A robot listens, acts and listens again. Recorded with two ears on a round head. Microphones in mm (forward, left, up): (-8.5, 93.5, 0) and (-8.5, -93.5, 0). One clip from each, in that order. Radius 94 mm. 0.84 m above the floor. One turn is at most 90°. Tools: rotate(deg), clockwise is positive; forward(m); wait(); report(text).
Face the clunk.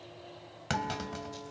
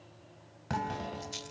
rotate(-60)
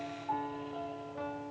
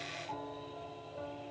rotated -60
wait()
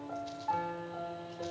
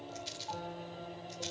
report("I heard a clunk, but can't make it out now. It was about straight ahead or 60° left.")